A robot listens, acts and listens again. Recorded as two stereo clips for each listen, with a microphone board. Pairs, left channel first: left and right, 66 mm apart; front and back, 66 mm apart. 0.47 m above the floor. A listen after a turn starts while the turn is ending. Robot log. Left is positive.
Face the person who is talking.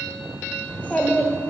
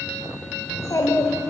note: The child speaking: 25° left.
cmd yaw +25
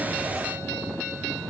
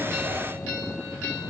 cmd idle
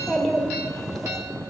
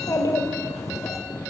end: Facing the child speaking, 1 to 2 m away.